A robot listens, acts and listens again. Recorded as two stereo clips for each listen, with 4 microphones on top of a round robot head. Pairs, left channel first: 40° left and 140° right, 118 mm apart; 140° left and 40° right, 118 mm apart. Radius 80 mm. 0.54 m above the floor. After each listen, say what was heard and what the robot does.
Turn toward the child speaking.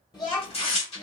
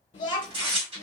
The child speaking: 85° left. Turn 85° left.
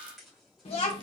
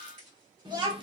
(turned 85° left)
Found it: a child speaking, straight ahead.